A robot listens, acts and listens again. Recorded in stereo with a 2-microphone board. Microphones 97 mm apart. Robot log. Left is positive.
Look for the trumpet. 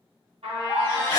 cmd yaw -90
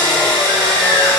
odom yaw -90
cmd idle
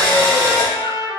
note: The trumpet is now 10° right.
cmd yaw -10
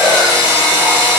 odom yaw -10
cmd idle
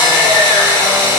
cmd idle
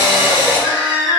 end: I heard a trumpet from this way, but can't make it out now.